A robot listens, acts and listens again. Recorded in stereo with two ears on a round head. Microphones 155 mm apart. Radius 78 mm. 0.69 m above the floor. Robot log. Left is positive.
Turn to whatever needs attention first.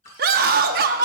note: The scream: about 55° right or 125° right.
cmd yaw -55
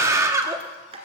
note: So it is at 20° right.
cmd yaw -20
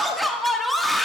end: Facing the scream.